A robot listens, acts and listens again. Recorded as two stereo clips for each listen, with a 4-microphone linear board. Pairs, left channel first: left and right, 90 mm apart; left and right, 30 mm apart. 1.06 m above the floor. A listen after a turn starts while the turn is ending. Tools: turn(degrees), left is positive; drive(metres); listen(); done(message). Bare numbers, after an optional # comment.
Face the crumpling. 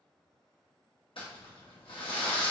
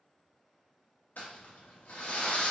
# The crumpling: about 70° left or 110° left.
turn(70)
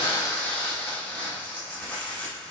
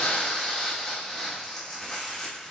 # So it is at 15° left.
turn(15)
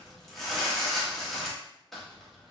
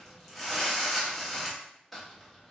done("Facing the crumpling, under 1 m away.")